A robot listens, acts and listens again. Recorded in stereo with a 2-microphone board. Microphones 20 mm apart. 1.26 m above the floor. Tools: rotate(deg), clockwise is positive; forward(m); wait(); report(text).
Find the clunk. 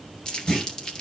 rotate(-35)
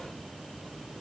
wait()
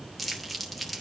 report("I heard a clunk, but can't make it out now. It was about straight ahead or 110° left.")